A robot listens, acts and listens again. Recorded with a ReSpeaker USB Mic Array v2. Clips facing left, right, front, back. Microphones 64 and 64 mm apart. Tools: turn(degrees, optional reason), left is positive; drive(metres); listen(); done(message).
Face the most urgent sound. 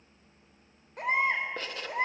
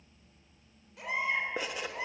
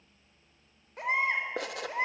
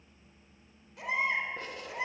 turn(degrees=45, reason="The baby crying: 45° left.")
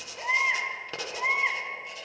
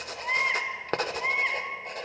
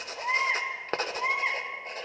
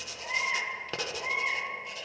turn(degrees=10, reason="The baby crying is now 10° left.")
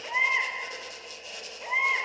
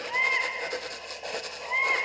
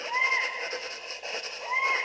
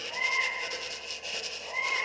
done("Found it: a baby crying, straight ahead, over 4 m away.")